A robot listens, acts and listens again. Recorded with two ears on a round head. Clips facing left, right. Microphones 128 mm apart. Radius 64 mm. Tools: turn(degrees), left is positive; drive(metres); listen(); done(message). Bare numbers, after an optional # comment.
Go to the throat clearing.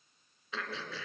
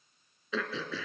turn(-90)
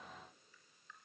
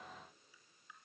listen()
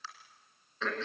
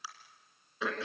# The throat clearing is now 10° right.
turn(-10)
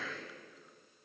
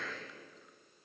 drive(1.0)
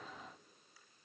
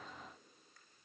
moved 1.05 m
listen()
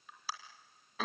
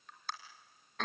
drive(1.0)
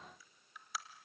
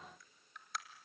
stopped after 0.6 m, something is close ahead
done("I am next to the throat clearing.")